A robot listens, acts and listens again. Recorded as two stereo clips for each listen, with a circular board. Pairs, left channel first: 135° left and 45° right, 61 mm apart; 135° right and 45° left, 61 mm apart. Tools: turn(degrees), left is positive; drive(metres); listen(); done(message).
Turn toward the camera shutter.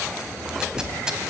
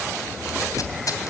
listen()
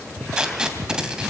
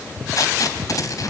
listen()
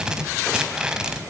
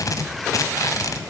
done("I can't make out a camera shutter to turn to.")